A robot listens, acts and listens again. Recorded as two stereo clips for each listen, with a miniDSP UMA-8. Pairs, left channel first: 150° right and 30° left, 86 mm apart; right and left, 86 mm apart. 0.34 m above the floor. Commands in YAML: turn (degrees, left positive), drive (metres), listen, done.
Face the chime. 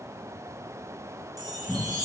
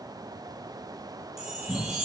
done: "Found it: a chime, straight ahead, 1 to 2 m away."